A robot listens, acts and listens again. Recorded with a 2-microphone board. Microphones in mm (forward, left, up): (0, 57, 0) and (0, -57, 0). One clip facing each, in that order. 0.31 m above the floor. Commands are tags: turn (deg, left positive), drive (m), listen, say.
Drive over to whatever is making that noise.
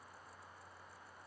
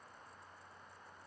<listen/>
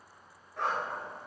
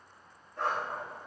<turn deg="75"/>
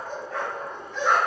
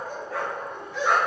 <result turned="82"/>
<drive m="1.0"/>
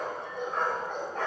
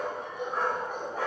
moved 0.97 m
<turn deg="-10"/>
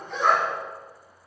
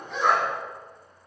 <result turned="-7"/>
<drive m="1.0"/>
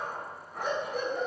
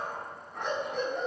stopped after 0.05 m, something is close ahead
<say>I am next to the dog barking.</say>